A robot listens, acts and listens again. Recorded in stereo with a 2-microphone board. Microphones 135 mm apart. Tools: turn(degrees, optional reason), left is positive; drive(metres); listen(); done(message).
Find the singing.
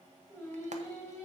turn(degrees=20, reason="The singing: about 20° left or 160° left.")
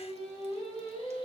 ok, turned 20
turn(degrees=135, reason="So it is at 135° left.")
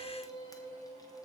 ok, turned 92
turn(degrees=25, reason="The singing is now 25° left.")
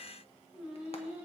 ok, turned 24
turn(degrees=-10, reason="The singing is now 10° right.")
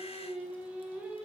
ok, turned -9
turn(degrees=-10, reason="The singing is now 10° right.")
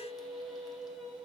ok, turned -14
done("Facing the singing, 2 to 4 m away.")